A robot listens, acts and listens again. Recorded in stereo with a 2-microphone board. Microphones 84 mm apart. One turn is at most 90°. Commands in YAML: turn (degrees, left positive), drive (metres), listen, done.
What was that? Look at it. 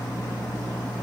listen: true
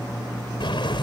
turn: 90
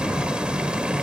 turn: -10
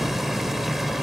done: "Facing the boiling."